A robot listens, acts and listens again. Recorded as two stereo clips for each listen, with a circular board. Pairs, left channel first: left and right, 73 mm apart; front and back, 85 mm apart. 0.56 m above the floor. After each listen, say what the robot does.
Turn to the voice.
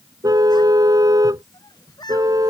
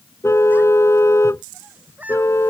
Turn 110° left.
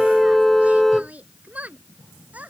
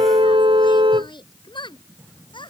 Turn 20° right.
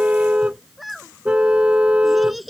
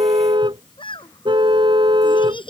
Found it: a child speaking, straight ahead.